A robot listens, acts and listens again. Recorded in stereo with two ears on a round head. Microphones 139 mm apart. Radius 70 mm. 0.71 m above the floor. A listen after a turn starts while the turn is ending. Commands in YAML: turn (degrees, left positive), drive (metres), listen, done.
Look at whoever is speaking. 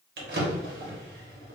listen: true
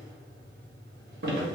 listen: true
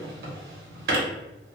done: "I can't make out anyone speaking, only a drawer."